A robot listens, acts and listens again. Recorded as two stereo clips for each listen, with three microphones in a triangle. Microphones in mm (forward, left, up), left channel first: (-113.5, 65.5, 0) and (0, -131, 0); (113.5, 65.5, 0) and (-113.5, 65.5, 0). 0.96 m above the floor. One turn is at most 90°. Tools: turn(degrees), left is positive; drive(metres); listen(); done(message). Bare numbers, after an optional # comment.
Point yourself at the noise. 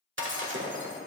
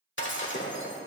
# The breaking glass: 30° right.
turn(-30)
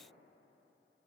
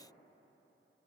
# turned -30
done("Facing where the breaking glass came from. I can't hear it now.")